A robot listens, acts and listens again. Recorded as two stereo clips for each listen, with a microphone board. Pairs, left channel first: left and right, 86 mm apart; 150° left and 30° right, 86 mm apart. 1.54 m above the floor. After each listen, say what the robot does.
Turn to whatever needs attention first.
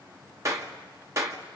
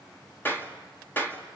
Keep listening.
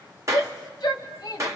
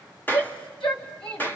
Turn 135° left.
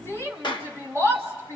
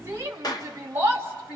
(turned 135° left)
Turn 30° left.
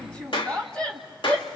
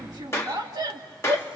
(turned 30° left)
Turn 10° left.
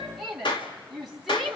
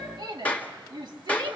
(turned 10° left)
Found it: a shout, straight ahead.